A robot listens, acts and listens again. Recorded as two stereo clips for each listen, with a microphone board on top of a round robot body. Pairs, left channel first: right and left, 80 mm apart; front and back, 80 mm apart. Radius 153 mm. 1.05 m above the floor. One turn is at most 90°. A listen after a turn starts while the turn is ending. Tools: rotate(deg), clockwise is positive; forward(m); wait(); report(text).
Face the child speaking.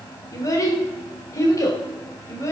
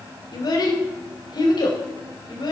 rotate(35)
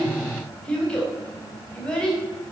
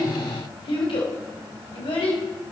rotate(10)
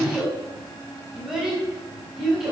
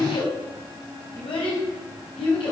rotate(-10)
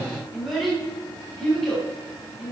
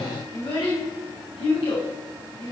report("Found it: a child speaking, straight ahead.")